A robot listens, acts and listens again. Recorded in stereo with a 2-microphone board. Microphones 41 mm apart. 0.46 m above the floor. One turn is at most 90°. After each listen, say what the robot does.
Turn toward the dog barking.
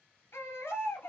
Keep listening.
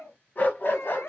Turn 55° left.
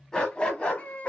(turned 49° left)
Turn 30° left.
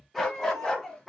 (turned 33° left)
Turn 10° left.
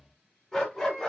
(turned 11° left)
Turn 10° left.
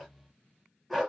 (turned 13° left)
Found it: a dog barking, straight ahead.